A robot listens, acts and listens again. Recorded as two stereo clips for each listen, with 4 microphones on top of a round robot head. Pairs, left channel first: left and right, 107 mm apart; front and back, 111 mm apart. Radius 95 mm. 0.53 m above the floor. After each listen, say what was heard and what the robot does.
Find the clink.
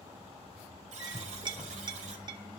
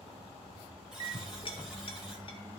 The clink: 45° right. Turn 45° right.
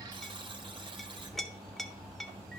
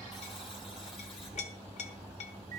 Found it: a clink, straight ahead, 1 to 2 m away.